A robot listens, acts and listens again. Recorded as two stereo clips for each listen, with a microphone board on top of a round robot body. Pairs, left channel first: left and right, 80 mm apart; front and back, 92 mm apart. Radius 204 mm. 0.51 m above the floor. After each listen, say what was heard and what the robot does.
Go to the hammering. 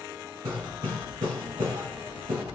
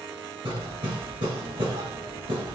The hammering: 140° right. Turn 140° right.
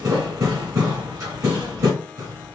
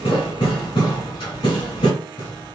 The hammering is now 40° right. Turn 40° right.
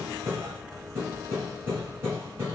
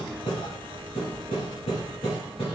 The hammering is now 25° right. Turn 25° right.
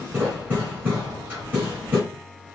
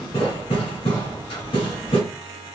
The hammering is now 20° right. Turn 20° right.
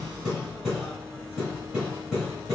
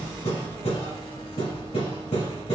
Drive 1.0 m forward.
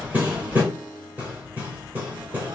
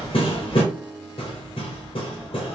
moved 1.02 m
The hammering is now 20° right. Turn 20° right.
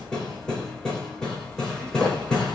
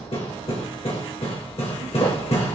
The hammering is now 10° left. Turn 10° left.
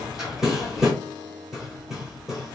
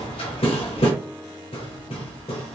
Drive 1.0 m forward.
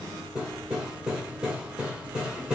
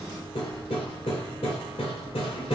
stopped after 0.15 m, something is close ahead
The hammering is now 10° right. Turn 10° right.
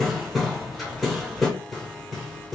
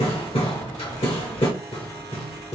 I am next to the hammering.